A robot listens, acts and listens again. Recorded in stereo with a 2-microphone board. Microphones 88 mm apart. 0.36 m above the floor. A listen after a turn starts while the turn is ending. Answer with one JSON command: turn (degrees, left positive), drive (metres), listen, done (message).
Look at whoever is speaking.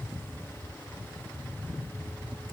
{"listen": true}
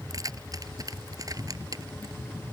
{"listen": true}
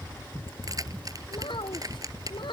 {"turn": 70}
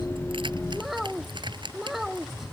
{"done": "Facing the child speaking."}